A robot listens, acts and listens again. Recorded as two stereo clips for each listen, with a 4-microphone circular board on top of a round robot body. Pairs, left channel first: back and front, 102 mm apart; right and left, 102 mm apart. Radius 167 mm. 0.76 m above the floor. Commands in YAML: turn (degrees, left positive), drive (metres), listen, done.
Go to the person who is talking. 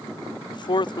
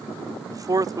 turn: 145
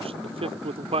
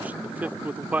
turn: 15
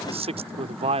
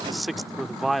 drive: 1.0
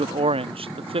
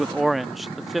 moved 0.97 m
drive: 1.0
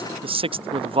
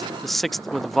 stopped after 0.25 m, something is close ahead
done: "Arrived at the man speaking, straight ahead."